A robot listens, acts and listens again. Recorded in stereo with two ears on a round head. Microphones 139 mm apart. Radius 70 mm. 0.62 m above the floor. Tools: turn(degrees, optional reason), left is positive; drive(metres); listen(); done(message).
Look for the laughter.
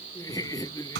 turn(degrees=20, reason="The laughter: about 20° left or 160° left.")
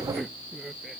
done("Found it: laughter, straight ahead.")